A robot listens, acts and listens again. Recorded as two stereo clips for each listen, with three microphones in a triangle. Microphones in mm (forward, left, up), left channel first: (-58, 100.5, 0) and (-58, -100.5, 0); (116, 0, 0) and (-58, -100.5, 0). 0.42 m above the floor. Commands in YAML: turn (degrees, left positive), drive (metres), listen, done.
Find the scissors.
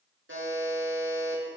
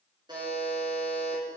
listen: true
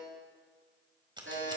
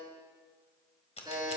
turn: -25
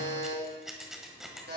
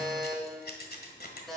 done: "Facing the scissors, 1 to 2 m away."